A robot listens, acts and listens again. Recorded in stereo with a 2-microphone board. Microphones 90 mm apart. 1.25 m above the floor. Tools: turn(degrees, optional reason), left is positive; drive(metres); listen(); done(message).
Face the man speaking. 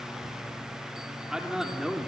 turn(degrees=-30)
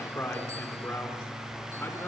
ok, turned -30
turn(degrees=25, reason="So it is at 25° left.")
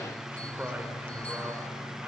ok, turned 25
listen()
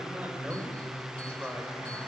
turn(degrees=-15, reason="The man speaking is now 15° right.")
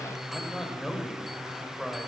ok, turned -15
done("Found it: a man speaking, straight ahead, over 4 m away.")